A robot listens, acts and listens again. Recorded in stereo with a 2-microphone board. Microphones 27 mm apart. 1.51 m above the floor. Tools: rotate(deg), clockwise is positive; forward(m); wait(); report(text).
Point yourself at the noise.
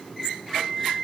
rotate(-35)
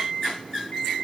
rotate(-110)
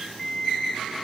report("Found it: an alarm clock, straight ahead, over 4 m away.")